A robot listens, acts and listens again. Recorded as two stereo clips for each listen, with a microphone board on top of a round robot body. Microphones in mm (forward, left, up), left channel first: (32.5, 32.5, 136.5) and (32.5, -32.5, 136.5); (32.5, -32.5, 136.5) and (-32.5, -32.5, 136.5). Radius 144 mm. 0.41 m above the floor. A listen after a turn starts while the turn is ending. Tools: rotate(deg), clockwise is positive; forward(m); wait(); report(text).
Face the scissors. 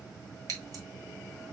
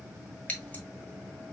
rotate(70)
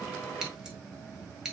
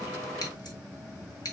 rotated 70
rotate(10)
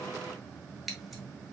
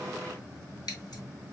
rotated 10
report("Found it: scissors, straight ahead, 1 to 2 m away.")